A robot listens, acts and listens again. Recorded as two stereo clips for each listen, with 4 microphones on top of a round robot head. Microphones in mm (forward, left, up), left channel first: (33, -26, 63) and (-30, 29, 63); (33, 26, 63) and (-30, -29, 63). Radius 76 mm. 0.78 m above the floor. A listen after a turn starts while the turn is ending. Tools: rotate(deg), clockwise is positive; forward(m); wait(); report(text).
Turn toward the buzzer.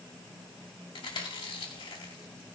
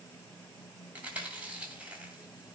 wait()
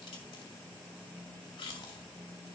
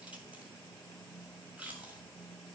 wait()
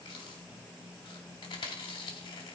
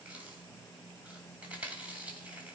report("I can't make out a buzzer, only chewing.")